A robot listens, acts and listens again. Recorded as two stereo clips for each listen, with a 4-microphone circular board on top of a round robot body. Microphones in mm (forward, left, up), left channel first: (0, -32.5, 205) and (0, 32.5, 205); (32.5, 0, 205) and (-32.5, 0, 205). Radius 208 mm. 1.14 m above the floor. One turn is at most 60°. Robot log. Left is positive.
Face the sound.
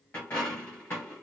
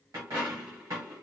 note: The dropped coin: 155° right.
cmd yaw -60
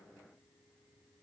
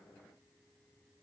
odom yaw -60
note: Nothing new. It was at 95° right.
cmd yaw -60
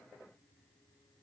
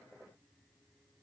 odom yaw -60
note: Nothing new. It was at 35° right.
cmd yaw -35
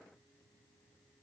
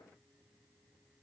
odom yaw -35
end: I heard a dropped coin from this way, but can't make it out now.